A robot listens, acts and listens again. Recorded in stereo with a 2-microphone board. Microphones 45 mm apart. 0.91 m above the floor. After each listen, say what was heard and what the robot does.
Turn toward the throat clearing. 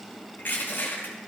Keep listening.
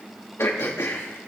The throat clearing: about 70° left or 110° left. Turn 70° left.
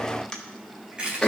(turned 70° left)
So it is at 20° left. Turn 20° left.
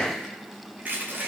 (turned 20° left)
Facing the throat clearing, 1 to 2 m away.